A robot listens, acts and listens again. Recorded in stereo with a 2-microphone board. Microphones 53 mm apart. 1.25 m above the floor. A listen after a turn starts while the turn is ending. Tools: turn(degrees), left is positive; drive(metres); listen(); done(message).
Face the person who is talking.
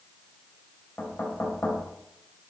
listen()
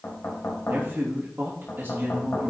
turn(degrees=-45)
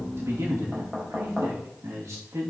turn(degrees=-90)
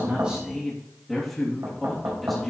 done("Facing the man speaking, 2 to 4 m away.")